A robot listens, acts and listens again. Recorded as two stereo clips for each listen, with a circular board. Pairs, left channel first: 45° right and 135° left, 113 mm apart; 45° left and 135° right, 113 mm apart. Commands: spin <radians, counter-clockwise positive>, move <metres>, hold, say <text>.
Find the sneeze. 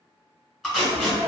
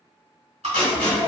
spin 1.22
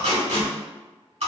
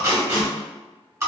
say Facing where the sneeze came from. I can't hear it now.